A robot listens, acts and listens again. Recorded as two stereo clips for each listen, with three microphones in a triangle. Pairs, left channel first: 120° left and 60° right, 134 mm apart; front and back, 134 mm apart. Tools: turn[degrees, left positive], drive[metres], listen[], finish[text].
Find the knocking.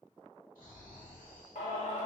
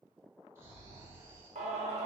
Action: listen[]
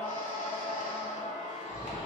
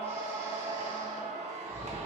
Action: listen[]
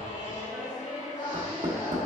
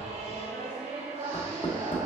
Thought: The knocking: 45° right.
Action: turn[-45]
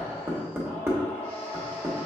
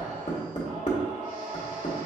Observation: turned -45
Thought: The knocking is now 10° left.
Action: turn[10]
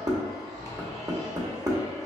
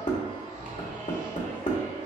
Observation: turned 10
Action: finish[Facing the knocking.]